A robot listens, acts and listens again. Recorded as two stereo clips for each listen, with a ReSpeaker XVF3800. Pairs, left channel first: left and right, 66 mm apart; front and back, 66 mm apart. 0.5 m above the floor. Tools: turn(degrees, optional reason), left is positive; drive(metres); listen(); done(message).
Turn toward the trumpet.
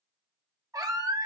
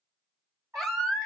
turn(degrees=-125, reason="The trumpet: 125° right.")
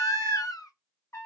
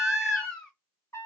turn(degrees=40, reason="The trumpet is now 40° left.")
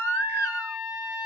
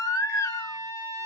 turn(degrees=-10, reason="The trumpet is now 10° right.")
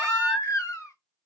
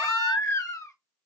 listen()
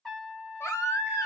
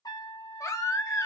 done("Facing the trumpet, 1 to 2 m away.")